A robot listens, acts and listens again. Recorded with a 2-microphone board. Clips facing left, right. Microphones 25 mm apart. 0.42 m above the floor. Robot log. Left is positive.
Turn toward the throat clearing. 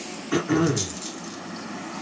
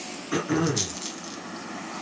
cmd yaw +30
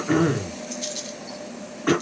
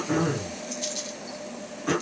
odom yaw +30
note: So it is at 140° left.
cmd yaw +140
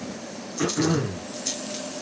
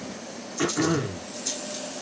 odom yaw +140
note: The throat clearing is now 10° right.
cmd yaw -10
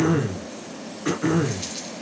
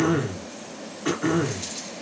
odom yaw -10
end: Facing the throat clearing, under 1 m away.